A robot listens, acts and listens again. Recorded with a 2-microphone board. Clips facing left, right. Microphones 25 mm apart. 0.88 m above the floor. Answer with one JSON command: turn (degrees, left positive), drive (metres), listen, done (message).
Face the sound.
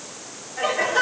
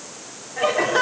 {"turn": -25}
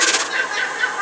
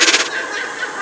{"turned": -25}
{"done": "Facing the laughter, 2 to 4 m away."}